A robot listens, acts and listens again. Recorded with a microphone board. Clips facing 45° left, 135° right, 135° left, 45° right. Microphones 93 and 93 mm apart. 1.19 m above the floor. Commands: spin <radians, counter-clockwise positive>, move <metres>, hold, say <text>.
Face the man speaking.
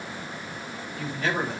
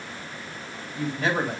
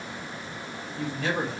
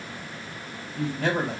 spin -1.05
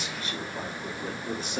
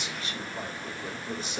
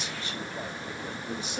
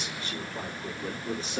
say Found it: a man speaking, straight ahead.